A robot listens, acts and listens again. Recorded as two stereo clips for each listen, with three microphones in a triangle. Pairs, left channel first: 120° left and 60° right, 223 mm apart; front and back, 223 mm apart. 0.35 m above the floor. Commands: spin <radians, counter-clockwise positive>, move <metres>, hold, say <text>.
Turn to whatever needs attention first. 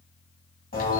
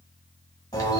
hold
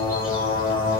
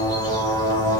hold
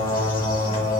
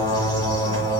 say I can't make out anything urgent, only a bird.